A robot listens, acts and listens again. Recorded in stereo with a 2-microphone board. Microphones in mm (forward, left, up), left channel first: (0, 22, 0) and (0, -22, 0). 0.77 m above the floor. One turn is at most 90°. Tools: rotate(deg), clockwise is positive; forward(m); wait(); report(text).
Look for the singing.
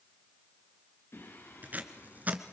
rotate(-90)
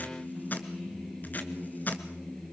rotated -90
rotate(-20)
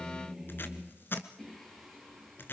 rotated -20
report("Found it: singing, straight ahead.")